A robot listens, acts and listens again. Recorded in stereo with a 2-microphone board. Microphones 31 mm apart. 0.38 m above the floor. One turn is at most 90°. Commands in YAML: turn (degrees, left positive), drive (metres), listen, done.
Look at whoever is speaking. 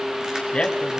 turn: 35
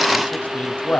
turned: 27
turn: 90
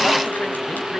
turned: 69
turn: 40
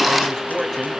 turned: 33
turn: 10
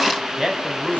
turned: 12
done: "Found it: a man speaking, straight ahead, 2 to 4 m away."